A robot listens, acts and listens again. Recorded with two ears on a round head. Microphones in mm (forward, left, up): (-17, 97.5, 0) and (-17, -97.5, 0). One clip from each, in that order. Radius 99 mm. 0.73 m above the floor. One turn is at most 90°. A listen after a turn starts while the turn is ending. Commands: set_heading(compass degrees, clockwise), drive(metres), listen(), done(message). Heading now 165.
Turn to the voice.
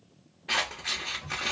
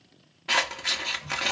listen()
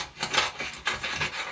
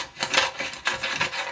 listen()
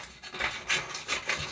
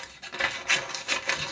done("I can't make out anyone speaking to turn to.")